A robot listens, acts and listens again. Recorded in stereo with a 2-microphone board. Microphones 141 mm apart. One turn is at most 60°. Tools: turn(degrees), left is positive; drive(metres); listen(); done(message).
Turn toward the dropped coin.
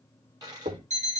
turn(degrees=-25)
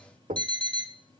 listen()
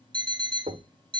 done("I heard a dropped coin, but can't make it out now. It was about straight ahead or 130° right.")